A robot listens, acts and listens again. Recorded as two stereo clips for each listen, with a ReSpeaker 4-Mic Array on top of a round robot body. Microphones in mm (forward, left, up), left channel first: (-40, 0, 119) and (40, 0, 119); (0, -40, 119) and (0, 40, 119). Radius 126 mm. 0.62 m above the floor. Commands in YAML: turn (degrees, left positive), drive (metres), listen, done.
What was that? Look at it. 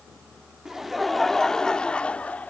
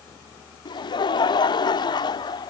turn: -110
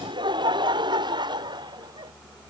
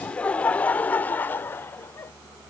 turn: -25
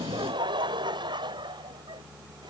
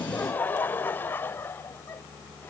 turn: -25
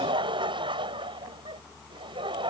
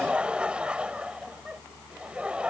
turn: 15
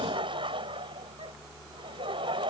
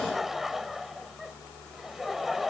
done: "Facing the laughter."